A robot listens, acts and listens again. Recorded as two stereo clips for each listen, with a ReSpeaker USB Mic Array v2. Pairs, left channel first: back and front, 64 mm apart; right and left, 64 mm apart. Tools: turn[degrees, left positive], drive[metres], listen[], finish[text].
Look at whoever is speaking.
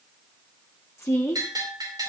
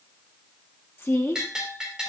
Thought: The woman speaking: 140° right.
Action: turn[-140]
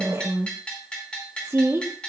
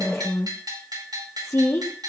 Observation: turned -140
Thought: The woman speaking is now 50° right.
Action: turn[-50]
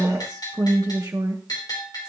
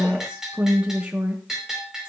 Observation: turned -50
Thought: The woman speaking is now 20° left.
Action: turn[20]
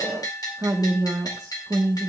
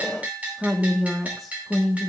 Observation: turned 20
Action: finish[Facing the woman speaking.]